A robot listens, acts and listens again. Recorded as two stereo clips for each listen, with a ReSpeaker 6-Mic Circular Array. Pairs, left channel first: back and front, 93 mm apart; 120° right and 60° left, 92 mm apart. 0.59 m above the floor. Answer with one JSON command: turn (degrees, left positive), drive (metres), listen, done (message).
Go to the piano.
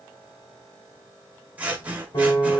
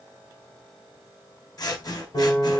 {"turn": -150}
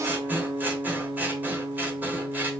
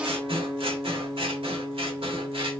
{"drive": 1.0}
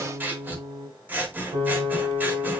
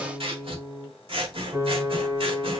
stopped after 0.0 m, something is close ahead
{"done": "Something is in my way. I am facing the piano but have not reached it."}